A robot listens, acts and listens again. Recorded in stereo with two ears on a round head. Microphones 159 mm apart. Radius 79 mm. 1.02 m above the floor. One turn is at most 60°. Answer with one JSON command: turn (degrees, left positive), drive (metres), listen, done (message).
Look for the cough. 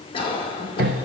{"turn": 30}
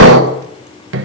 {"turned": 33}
{"listen": true}
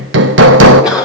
{"done": "Facing the cough."}